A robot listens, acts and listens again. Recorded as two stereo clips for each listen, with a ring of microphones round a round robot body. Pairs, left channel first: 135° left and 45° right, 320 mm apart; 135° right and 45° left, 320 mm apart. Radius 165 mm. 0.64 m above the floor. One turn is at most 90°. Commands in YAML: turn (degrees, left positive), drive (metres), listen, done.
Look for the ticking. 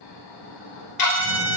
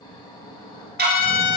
turn: 90
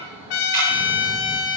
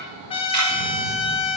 turn: 15
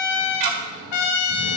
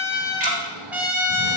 turn: -20
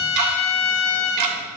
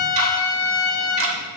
done: "Facing the ticking."